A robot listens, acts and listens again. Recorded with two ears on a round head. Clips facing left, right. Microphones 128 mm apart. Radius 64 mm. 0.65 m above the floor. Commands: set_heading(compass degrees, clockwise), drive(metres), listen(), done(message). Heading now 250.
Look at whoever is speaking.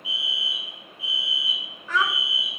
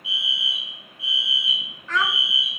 set_heading(220)
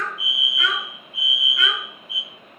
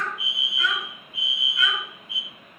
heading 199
set_heading(79)
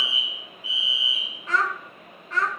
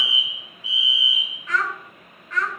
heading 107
set_heading(77)
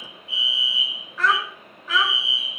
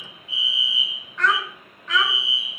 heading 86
done("Found it: a child speaking, straight ahead.")